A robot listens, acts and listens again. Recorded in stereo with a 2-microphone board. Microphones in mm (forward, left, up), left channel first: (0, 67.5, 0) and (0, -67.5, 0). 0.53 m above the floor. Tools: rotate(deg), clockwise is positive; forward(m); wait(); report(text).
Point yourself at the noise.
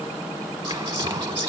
rotate(40)
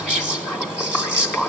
rotate(10)
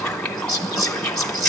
report("Facing the whispering, 2 to 4 m away.")